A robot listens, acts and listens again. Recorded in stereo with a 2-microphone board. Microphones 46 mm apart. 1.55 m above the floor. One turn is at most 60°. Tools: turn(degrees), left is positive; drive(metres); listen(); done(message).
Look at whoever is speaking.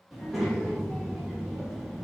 turn(degrees=-30)
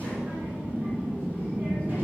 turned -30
turn(degrees=-60)
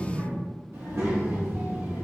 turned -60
turn(degrees=-60)
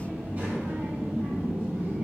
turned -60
turn(degrees=-30)
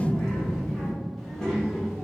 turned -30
turn(degrees=15)
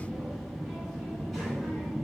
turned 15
done("Found it: a child speaking, straight ahead, 1 to 2 m away.")